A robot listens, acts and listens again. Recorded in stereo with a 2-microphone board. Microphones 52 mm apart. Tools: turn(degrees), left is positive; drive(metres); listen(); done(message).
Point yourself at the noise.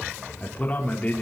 turn(degrees=30)
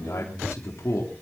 turn(degrees=120)
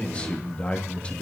turn(degrees=20)
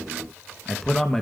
done("Facing the man speaking.")